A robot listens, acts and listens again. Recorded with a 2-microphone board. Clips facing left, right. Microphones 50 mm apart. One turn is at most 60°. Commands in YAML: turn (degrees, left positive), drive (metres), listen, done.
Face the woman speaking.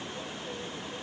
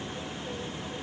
listen: true
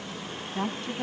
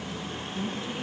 turn: 60
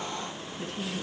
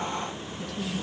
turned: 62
turn: 40
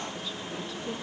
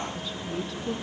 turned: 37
done: "Found it: a woman speaking, straight ahead."